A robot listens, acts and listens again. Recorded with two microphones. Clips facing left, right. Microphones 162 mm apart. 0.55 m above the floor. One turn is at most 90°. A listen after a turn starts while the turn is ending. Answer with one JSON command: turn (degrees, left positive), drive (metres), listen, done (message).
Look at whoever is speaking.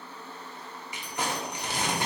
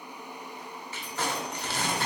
{"listen": true}
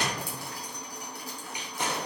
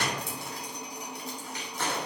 {"listen": true}
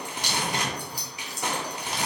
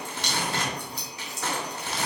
{"done": "I can't make out anyone speaking to turn to."}